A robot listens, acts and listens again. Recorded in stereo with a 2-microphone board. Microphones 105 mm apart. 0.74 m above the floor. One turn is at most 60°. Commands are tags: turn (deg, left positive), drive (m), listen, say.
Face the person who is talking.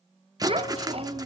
<turn deg="-60"/>
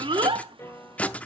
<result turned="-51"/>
<turn deg="-55"/>
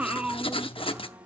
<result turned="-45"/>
<turn deg="-10"/>
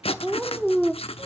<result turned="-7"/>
<say>Found it: a child speaking, straight ahead, 1 to 2 m away.</say>